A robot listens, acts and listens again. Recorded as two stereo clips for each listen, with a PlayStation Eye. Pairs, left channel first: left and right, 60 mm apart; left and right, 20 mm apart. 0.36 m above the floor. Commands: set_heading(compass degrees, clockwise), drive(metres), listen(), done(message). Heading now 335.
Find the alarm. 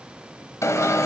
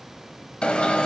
set_heading(285)
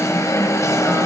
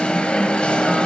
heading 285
set_heading(220)
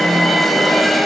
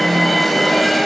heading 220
done("Facing the alarm.")